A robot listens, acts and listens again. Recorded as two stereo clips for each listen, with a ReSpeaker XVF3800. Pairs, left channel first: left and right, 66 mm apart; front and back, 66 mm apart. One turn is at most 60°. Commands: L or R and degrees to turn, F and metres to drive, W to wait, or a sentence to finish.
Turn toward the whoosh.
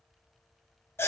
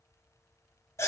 W
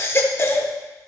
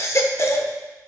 W
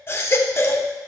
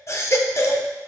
I can't make out a whoosh to turn to.